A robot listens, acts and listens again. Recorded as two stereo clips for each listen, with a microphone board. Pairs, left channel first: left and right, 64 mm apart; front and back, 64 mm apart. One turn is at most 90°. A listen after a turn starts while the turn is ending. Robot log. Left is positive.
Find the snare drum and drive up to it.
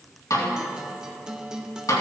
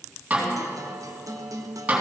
note: The snare drum: 115° left.
cmd yaw +90
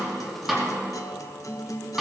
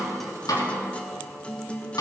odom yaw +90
note: The snare drum is now 10° right.
cmd yaw -10
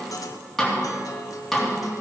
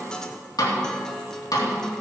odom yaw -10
cmd fwd 1.0
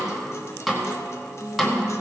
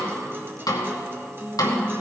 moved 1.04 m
cmd fwd 1.0
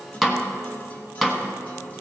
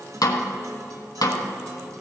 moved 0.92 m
cmd fwd 1.0
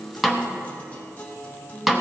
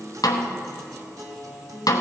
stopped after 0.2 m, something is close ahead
end: I am next to the snare drum.